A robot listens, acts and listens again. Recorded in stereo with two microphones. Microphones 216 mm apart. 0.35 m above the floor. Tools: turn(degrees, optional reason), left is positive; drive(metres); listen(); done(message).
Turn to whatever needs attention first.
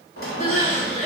turn(degrees=35, reason="The crying: about 35° left or 145° left.")
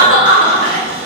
turn(degrees=110, reason="So it is at 110° left.")
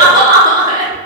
turn(degrees=-20, reason="The crying is now 20° right.")
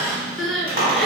done("Facing the crying.")